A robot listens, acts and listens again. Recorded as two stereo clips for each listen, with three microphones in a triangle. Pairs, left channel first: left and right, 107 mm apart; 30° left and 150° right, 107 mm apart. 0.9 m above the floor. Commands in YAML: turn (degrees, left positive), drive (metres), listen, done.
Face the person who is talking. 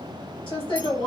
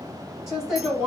turn: 130
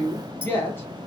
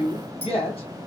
turn: 25
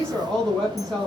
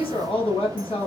turn: 10
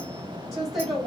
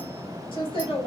done: "Found it: a woman speaking, straight ahead."